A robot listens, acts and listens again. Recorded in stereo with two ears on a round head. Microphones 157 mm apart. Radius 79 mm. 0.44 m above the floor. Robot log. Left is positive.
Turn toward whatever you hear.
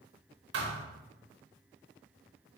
note: The thud: about 60° right or 120° right.
cmd yaw -60
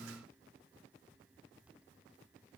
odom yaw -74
cmd idle
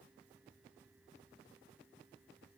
end: I heard a thud, but can't make it out now. It was about 10° left or 45° right.